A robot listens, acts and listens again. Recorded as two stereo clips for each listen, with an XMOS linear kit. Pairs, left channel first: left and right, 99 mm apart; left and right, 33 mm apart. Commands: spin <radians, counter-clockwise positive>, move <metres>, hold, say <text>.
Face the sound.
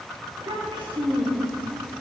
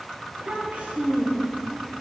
spin -1.05
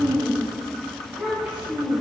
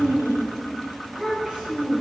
spin -0.35
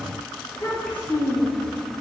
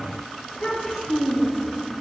spin 0.26
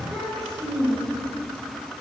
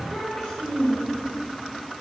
say Facing the child speaking, 2 to 4 m away.